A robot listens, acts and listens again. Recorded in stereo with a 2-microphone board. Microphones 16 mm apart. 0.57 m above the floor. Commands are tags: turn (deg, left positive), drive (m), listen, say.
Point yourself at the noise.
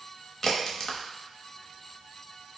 <turn deg="30"/>
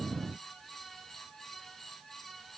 <listen/>
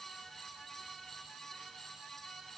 <say>I heard a crack, but can't make it out now. It was about straight ahead or 120° left.</say>